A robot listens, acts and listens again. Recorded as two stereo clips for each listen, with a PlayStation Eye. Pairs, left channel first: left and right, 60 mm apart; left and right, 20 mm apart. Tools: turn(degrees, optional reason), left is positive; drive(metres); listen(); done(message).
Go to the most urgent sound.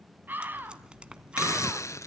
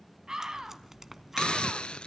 turn(degrees=-30, reason="The scream: about 30° right or 150° right.")
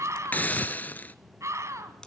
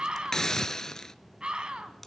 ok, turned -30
turn(degrees=-115, reason="So it is at 115° right.")
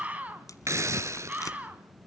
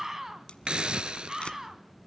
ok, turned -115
turn(degrees=-30, reason="The scream is now 30° right.")
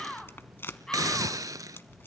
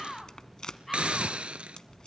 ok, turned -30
turn(degrees=10, reason="The scream is now 10° left.")
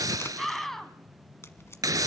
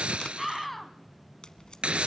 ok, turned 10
drive(metres=1.0)
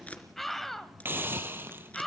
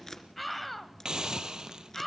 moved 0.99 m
drive(metres=1.0)
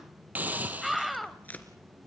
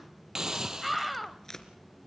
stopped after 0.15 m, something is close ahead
done("Arrived at the scream, straight ahead.")